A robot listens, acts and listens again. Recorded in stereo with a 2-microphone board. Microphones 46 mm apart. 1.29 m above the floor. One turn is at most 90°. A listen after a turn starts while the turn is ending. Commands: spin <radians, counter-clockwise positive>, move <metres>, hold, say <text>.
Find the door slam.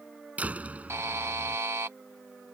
spin -0.52
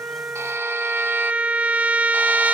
hold
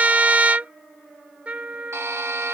say I heard a door slam, but can't make it out now. It was about straight ahead or 120° right.